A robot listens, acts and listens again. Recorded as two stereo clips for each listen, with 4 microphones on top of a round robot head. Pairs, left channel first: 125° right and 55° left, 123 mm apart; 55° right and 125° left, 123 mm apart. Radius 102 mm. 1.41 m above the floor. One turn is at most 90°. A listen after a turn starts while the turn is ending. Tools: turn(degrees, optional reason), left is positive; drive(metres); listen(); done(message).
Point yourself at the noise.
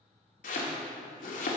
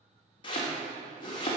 turn(degrees=-90, reason="The chopping: 110° right.")
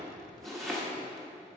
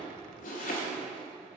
turn(degrees=-35, reason="The chopping is now 35° right.")
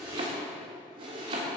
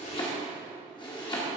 done("Facing the chopping.")